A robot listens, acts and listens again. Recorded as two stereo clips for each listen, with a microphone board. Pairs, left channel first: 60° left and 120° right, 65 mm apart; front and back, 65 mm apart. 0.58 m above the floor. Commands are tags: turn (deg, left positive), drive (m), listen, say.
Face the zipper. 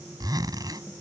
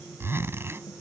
<turn deg="-130"/>
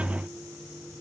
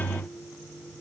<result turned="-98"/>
<turn deg="-30"/>
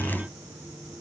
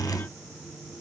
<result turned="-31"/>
<listen/>
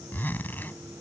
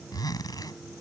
<say>Found it: a zipper, straight ahead.</say>